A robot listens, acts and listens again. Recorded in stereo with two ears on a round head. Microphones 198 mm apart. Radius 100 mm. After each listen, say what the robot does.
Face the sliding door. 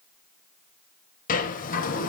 Turn 40° left.
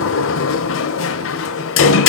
Turn 95° left.
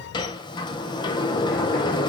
Turn 20° left.
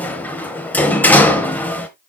Turn 10° left.
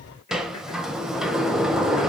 Facing the sliding door, 1 to 2 m away.